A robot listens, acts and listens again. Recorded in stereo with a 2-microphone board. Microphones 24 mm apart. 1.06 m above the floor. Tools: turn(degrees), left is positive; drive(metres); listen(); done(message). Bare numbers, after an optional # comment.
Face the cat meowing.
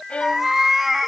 turn(-30)
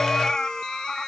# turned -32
# So it is at 30° left.
turn(30)
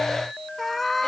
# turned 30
done("Facing the cat meowing.")